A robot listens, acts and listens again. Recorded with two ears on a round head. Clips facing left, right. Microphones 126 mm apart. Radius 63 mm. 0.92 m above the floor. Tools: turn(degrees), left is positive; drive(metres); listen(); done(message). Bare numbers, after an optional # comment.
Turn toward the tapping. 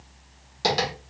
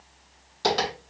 turn(30)
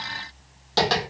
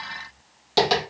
# So it is at 15° right.
turn(-15)
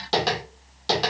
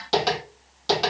done("Found it: tapping, straight ahead.")